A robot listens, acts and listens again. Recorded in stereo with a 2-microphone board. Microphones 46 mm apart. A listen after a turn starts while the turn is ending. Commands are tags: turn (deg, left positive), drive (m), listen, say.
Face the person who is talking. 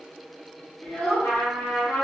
<turn deg="30"/>
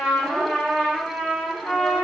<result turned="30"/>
<listen/>
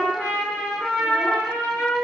<listen/>
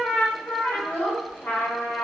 <turn deg="140"/>
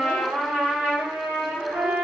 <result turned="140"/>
<listen/>
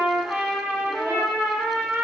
<listen/>
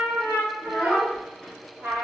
<say>Facing the child speaking, 1 to 2 m away.</say>